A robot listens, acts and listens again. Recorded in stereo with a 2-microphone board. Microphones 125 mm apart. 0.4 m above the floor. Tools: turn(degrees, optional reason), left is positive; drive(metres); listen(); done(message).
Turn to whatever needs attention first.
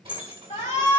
turn(degrees=75, reason="The shout: about 75° left or 105° left.")
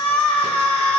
turn(degrees=15, reason="So it is at 15° left.")
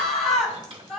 done("Found it: a shout, straight ahead.")